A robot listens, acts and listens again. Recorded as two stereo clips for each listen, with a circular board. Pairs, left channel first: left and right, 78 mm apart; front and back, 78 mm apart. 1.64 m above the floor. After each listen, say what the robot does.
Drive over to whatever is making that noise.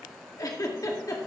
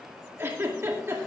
Turn 125° left.
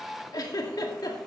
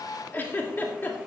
Turn 60° left.
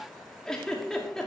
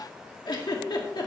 Turn 10° left.
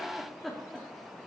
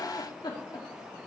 Drive 1.0 m forward.
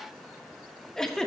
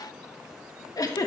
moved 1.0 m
Turn 10° left.
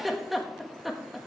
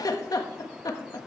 Drive 1.0 m forward.
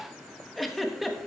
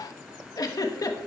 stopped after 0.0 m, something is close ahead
Arrived at the giggle, straight ahead.